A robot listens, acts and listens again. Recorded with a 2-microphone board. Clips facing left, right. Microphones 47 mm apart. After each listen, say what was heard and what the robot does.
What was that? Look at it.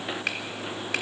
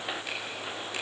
The finger snap: about 75° left or 105° left. Turn 75° left.
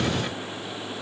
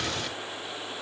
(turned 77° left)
Keep listening.
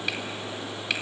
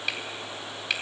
Facing the finger snap.